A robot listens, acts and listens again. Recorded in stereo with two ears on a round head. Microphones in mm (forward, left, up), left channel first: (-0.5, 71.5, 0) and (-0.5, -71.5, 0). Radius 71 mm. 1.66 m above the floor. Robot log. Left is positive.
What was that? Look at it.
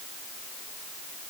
cmd idle
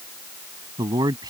note: The man speaking: about 25° right or 155° right.
cmd yaw -25
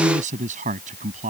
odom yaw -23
note: So it is at 135° right.
cmd yaw -135
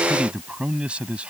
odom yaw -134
end: Found it: a man speaking, straight ahead.